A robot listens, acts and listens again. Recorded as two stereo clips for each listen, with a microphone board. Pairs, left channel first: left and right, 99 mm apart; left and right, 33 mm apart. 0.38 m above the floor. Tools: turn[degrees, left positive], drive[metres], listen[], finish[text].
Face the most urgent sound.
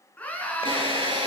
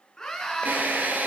Thought: The scream: about 15° left or 165° left.
Action: turn[15]
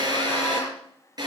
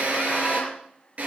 Action: listen[]
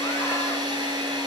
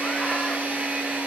Action: listen[]
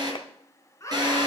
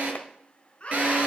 Thought: So it is at 150° left.
Action: turn[150]
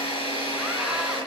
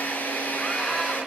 Action: listen[]
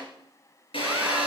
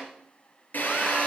Action: listen[]
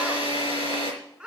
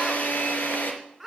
Thought: The scream is now 10° right.
Action: turn[-10]
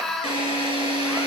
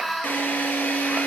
Action: finish[Found it: a scream, straight ahead, 2 to 4 m away.]